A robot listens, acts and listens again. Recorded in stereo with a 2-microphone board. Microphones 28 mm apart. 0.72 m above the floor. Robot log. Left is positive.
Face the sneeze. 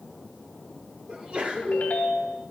note: The sneeze: about 45° right or 135° right.
cmd yaw -45
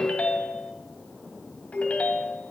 cmd idle
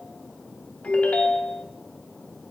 end: I heard a sneeze, but can't make it out now. It was about straight ahead or 90° right.